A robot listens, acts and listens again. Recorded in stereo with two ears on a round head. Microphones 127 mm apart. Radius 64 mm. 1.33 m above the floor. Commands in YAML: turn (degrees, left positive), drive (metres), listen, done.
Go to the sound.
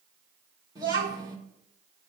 turn: -25
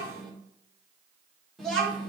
drive: 1.0
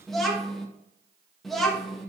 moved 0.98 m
drive: 1.0
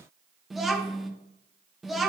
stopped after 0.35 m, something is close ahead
done: "Arrived at the child speaking, straight ahead."